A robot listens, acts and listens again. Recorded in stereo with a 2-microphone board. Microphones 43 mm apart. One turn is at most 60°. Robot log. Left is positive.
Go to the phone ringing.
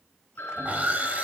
note: The phone ringing: about 65° left or 115° left.
cmd yaw +60
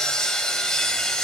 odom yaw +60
cmd idle
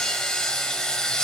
cmd idle
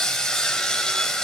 end: I heard a phone ringing, but can't make it out now. It was about 5° left or 55° left. I did not reach it.